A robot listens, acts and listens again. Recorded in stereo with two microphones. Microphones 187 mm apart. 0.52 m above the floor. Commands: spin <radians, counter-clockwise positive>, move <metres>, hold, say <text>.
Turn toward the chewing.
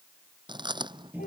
spin -0.44
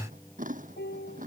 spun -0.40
spin -2.27
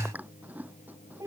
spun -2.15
spin -0.17
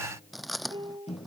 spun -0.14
say Found it: chewing, straight ahead.